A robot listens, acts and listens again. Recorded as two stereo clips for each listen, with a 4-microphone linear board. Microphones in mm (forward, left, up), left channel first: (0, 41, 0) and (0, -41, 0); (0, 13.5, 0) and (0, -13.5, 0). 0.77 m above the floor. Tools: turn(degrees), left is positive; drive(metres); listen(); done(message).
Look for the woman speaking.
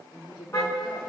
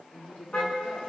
turn(degrees=70)
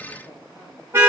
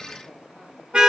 listen()
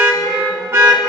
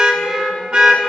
listen()
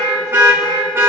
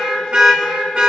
done("I heard a woman speaking, but can't make it out now. It was about straight ahead or 40° left.")